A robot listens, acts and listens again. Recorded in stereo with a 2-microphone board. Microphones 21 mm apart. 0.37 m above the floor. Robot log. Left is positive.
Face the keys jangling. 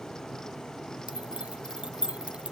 note: The keys jangling: about 70° right or 110° right.
cmd yaw -70
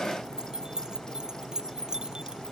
note: So it is at 40° right.
cmd yaw -40
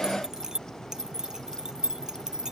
note: The keys jangling is now 35° right.
cmd yaw -35
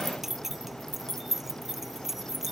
note: The keys jangling is now 15° right.
cmd yaw -15
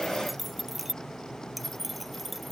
end: Found it: keys jangling, straight ahead.